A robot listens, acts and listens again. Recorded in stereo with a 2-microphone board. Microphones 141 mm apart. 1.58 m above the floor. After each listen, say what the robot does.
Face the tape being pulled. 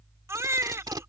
Turn 30° right.
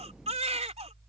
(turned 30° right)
Keep listening.
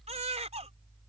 Keep listening.
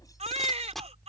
Found it: tape being pulled, straight ahead.